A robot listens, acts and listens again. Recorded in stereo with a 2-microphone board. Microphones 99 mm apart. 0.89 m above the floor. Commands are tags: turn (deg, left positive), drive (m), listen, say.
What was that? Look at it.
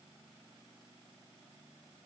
<listen/>
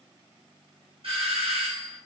<turn deg="-65"/>
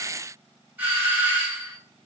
<turn deg="-20"/>
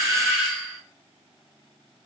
<say>Facing the doorbell, 1 to 2 m away.</say>